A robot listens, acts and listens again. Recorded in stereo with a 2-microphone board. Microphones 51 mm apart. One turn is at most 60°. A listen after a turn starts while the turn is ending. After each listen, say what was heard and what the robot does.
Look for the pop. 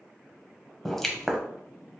Turn 30° left.
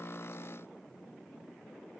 Keep listening.
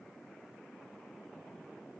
I heard a pop, but can't make it out now. It was about 25° right or 145° left.